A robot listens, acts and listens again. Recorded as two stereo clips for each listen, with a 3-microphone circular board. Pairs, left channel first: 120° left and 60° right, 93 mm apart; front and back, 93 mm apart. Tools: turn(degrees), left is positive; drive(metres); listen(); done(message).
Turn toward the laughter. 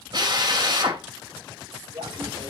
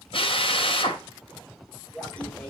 turn(degrees=-80)
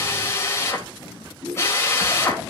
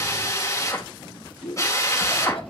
done("Found it: laughter, straight ahead, 2 to 4 m away.")